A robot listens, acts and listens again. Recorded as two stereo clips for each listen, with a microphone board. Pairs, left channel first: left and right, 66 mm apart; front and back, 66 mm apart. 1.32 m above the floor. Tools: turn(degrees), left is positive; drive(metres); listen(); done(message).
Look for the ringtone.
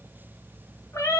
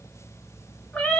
listen()
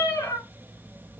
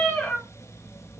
listen()
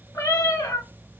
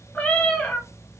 done("I can't make out a ringtone to turn to.")